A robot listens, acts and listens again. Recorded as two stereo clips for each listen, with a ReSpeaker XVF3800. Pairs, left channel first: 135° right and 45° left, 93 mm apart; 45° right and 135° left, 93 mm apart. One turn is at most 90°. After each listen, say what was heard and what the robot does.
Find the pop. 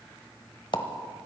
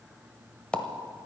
The pop: 120° right. Turn 90° right.
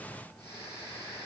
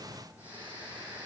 Nothing new. It was at 30° right. Turn 30° right.
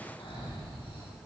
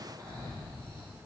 Facing where the pop came from. I can't hear it now.